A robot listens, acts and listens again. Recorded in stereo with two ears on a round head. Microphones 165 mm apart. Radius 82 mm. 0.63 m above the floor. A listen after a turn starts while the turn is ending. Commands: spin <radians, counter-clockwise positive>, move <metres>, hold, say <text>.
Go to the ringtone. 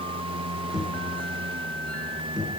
hold
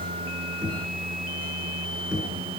hold
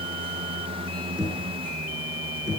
say I can't make out a ringtone, only knocking.